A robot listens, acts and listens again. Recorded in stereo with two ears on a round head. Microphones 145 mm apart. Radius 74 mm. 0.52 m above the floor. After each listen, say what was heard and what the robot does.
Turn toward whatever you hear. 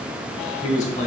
The man speaking: about 50° left or 130° left. Turn 50° left.
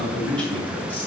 So it is at 10° left. Turn 10° left.
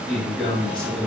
The man speaking is now 10° left. Turn 10° left.
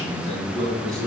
Found it: a man speaking, straight ahead.